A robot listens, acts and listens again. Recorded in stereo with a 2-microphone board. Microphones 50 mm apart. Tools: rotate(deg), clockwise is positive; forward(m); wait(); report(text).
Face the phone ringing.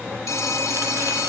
rotate(-90)
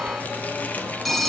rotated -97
report("Found it: a phone ringing, straight ahead.")